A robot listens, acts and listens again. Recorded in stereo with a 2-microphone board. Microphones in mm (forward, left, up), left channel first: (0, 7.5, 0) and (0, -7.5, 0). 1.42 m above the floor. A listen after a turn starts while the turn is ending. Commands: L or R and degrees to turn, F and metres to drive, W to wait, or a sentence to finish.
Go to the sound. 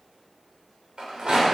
R90
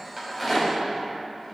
F1.0
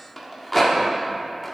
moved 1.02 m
F1.0
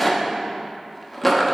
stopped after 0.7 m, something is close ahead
I am next to the rattle.